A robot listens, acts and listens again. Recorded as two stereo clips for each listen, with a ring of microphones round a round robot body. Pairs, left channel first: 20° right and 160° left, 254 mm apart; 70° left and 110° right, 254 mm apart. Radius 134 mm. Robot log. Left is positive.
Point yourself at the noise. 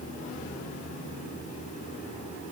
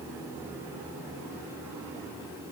cmd idle
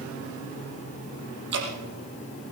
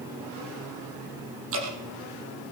note: The dripping: 155° right.
cmd yaw -155
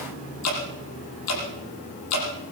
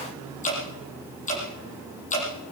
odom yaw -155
end: Found it: dripping, straight ahead.